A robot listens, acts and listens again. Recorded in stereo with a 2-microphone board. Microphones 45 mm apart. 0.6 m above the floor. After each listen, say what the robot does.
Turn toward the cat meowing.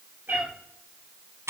Turn 45° right.
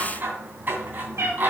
Turn 90° right.
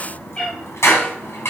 Turn 25° left.
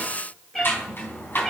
Found it: a cat meowing, straight ahead.